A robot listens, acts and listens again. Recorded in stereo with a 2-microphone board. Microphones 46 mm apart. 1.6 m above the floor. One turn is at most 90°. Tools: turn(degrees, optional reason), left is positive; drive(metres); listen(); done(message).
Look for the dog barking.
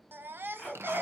turn(degrees=30)
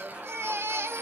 listen()
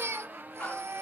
listen()
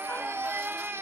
done("I heard a dog barking, but can't make it out now. It was about 30° right or 150° left.")